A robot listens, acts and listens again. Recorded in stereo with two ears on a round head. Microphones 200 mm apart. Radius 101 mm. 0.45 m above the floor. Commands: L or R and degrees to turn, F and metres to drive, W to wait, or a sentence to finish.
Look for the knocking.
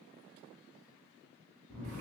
W
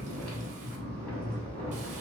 W
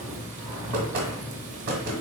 R45
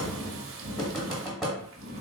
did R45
Facing the knocking.